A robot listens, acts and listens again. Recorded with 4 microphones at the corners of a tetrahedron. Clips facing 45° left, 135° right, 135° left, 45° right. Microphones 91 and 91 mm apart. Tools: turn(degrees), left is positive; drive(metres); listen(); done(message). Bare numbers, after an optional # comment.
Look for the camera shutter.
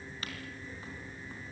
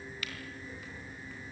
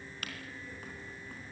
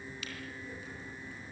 # The camera shutter: 100° left.
turn(100)
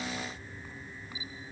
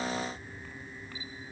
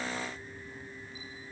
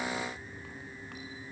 listen()
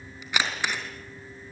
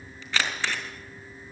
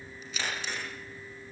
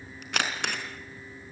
# The camera shutter is now 30° right.
turn(-30)
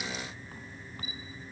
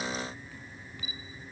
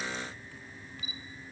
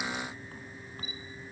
listen()
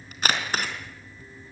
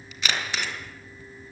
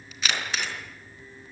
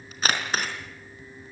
done("Found it: a camera shutter, straight ahead.")